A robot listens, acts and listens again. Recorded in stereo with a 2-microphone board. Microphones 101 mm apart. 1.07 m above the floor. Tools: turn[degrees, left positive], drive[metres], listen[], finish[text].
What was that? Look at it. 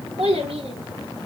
Thought: The child speaking: about 75° right or 105° right.
Action: turn[-75]
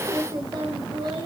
Thought: So it is at 60° right.
Action: turn[-60]
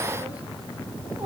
Action: listen[]
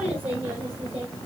Thought: The child speaking is now 25° right.
Action: turn[-25]
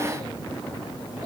Action: finish[Facing the child speaking.]